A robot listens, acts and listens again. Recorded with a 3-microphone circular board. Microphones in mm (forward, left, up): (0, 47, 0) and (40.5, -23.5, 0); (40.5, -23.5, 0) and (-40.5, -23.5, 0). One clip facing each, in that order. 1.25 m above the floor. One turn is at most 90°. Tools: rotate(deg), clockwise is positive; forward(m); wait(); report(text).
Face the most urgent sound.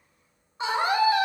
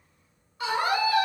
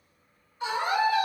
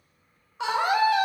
rotate(90)
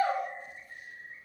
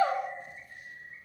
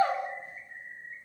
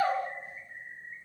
rotate(65)
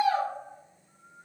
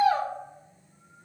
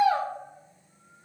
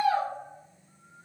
report("Found it: a scream, straight ahead, 1 to 2 m away.")